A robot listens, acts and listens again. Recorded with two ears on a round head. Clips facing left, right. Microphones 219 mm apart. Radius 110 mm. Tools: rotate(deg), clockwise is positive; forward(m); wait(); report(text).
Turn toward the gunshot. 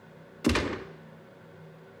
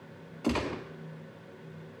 rotate(-25)
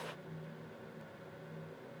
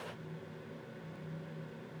wait()
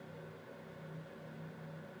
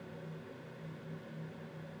report("I heard a gunshot, but can't make it out now. It was about straight ahead or 130° left.")